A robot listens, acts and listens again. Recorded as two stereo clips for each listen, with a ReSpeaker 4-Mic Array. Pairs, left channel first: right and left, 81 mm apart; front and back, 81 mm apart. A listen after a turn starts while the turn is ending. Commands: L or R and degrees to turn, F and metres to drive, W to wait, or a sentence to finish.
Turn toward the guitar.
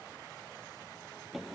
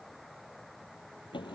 W
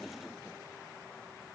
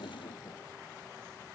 W
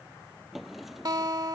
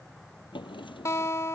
L50
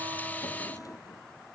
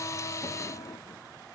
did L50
W
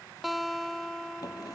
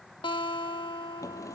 Found it: a guitar, straight ahead.